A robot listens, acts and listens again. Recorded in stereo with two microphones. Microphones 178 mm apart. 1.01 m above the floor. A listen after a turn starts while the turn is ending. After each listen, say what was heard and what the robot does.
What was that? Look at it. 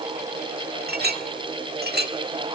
The clink: about 55° right or 125° right. Turn 55° right.
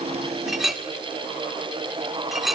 Found it: a clink, straight ahead, 1 to 2 m away.